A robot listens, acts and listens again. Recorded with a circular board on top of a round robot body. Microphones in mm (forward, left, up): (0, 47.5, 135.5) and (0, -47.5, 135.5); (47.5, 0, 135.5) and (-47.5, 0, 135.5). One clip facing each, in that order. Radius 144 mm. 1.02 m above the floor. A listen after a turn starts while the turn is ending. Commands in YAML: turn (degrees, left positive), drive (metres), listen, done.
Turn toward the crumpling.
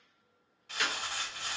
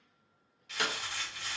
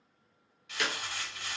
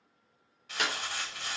turn: 130
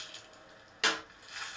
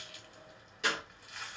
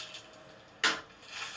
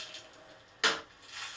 done: "Found it: crumpling, straight ahead, 1 to 2 m away."